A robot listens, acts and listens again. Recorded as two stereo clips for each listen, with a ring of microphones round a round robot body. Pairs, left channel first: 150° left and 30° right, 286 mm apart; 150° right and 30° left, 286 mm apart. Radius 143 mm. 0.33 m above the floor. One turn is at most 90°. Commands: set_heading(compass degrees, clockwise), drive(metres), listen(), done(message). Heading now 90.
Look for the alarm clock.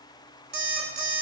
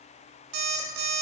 set_heading(65)
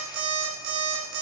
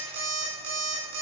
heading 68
done("Found it: an alarm clock, straight ahead, 1 to 2 m away.")